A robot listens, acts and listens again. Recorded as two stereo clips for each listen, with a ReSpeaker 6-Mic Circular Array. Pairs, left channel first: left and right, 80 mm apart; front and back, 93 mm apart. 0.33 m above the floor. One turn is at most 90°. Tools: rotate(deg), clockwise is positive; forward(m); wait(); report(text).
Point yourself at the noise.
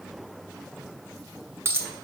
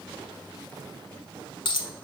rotate(25)
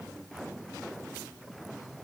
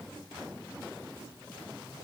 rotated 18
rotate(10)
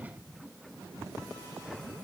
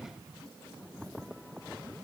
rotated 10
report("I heard a dropped coin from this way, but can't make it out now.")